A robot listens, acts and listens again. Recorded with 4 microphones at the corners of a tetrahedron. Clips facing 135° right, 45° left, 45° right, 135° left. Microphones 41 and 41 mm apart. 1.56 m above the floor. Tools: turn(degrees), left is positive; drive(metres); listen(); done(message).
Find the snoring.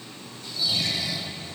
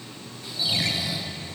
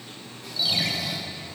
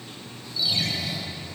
turn(degrees=-30)
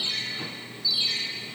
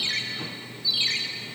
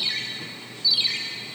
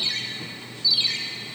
listen()
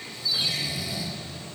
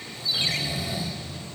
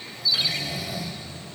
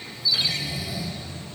turn(degrees=-10)
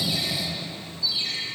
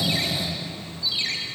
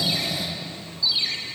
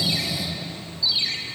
done("Facing the snoring.")